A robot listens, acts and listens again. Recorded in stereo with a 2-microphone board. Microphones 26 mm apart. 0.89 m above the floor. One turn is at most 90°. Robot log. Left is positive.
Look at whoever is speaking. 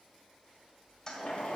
cmd idle
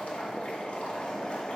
cmd idle
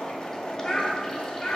note: The child speaking: about 30° left or 150° left.
cmd yaw +30
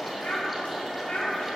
note: So it is at 110° left.
cmd yaw +90
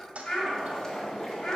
note: The child speaking is now 50° left.
cmd yaw +50
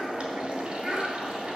note: The child speaking is now 20° right.
cmd yaw -20
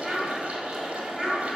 end: Facing the child speaking, 2 to 4 m away.